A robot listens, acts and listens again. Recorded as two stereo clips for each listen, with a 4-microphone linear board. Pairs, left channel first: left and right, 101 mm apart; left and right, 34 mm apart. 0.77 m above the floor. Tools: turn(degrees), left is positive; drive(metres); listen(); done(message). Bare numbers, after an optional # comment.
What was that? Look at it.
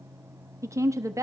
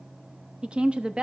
# The woman speaking: about 30° right or 150° right.
turn(-30)
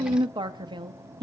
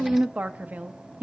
# So it is at 110° right.
turn(-110)
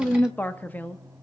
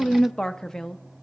# The woman speaking is now 20° left.
turn(20)
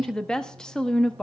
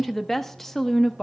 # The woman speaking is now 10° left.
turn(10)
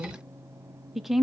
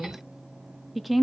done("Found it: a woman speaking, straight ahead.")